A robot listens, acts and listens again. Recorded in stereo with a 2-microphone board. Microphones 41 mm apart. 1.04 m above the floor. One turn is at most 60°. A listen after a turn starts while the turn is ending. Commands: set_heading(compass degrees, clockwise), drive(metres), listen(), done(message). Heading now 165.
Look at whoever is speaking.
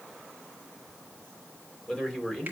set_heading(145)
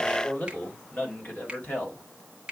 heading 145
set_heading(85)
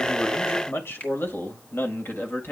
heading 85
set_heading(35)
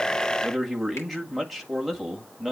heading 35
done("Found it: a man speaking, straight ahead.")